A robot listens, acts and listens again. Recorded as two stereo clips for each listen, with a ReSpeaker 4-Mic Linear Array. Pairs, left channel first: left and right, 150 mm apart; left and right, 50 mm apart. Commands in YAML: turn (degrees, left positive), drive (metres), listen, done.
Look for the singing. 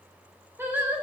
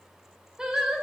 turn: -30
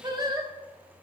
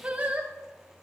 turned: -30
turn: -155
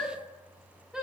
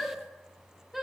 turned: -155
done: "Facing the singing, 1 to 2 m away."